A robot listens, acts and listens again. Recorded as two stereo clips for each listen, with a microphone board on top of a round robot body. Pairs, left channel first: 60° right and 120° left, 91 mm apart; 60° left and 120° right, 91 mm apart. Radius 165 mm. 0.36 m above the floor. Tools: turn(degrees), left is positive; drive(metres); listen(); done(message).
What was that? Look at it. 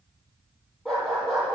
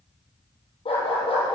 turn(degrees=30)
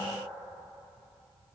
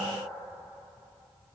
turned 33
listen()
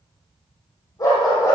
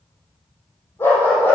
done("Found it: a dog barking, straight ahead.")